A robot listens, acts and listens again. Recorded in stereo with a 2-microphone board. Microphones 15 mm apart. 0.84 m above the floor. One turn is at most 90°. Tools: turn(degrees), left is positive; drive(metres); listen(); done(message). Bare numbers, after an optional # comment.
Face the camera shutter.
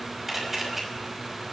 # The camera shutter: about 25° right or 155° right.
turn(-25)
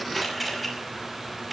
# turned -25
done("Found it: a camera shutter, straight ahead, over 4 m away.")